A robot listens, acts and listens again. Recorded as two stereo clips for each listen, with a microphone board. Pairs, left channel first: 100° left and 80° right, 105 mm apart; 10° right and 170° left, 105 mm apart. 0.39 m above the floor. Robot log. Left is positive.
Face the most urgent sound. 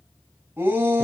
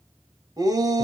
note: The shout: 145° right.
cmd yaw -145
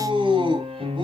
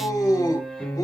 note: The shout is now 60° right.
cmd yaw -60
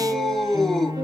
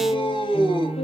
note: The shout is now 15° left.
cmd yaw +15
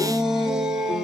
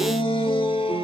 end: Found it: a shout, straight ahead, 2 to 4 m away.